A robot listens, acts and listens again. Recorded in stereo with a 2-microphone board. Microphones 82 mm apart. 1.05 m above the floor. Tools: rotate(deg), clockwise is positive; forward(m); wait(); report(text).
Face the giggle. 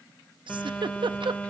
rotate(90)
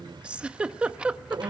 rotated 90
rotate(15)
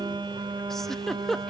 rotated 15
report("Facing the giggle, under 1 m away.")